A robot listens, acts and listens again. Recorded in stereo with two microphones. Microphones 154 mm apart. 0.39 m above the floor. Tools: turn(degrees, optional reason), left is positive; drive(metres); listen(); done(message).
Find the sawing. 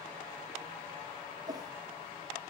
listen()
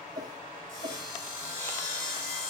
turn(degrees=60, reason="The sawing: about 60° left or 120° left.")
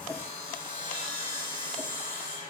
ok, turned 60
turn(degrees=60, reason="So it is at 60° left.")
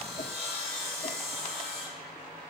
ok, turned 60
done("Facing the sawing.")